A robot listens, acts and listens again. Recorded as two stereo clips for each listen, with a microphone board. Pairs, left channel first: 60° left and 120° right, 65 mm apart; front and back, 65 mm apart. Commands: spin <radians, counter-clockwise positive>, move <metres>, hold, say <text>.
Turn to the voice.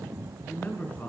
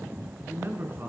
spin 2.18
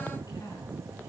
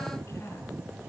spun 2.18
hold
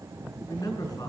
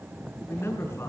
spin 0.87
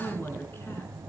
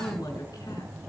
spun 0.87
spin 0.17
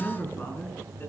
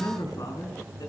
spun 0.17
say Facing the man speaking.